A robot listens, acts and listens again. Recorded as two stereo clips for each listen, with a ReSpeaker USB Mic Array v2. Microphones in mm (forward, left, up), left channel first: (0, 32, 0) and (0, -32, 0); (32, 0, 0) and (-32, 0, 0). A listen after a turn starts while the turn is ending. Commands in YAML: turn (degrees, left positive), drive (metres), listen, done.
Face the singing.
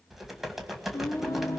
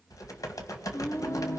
turn: 45
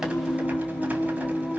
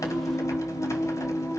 done: "Found it: singing, straight ahead, 2 to 4 m away."